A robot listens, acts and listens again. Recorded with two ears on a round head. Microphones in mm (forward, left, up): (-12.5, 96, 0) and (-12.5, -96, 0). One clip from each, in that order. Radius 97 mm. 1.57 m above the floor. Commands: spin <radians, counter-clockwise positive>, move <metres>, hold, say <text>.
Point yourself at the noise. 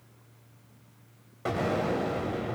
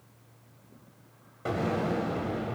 spin 0.26
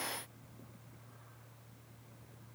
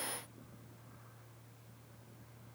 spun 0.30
hold
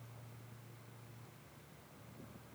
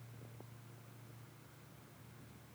say I heard an explosion, but can't make it out now. It was about straight ahead or 145° left.